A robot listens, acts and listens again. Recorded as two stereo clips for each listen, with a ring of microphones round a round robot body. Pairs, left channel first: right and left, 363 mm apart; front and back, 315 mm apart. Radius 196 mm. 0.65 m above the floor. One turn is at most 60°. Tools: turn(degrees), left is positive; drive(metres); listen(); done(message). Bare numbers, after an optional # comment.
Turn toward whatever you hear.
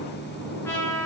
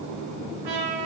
# The trumpet: 175° right.
turn(-60)
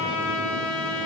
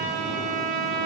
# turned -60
# The trumpet is now 140° right.
turn(-60)
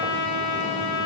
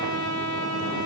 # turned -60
# The trumpet is now 85° right.
turn(-60)
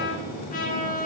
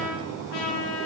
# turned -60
# The trumpet is now 20° right.
turn(-20)
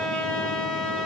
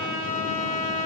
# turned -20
done("Found it: a trumpet, straight ahead.")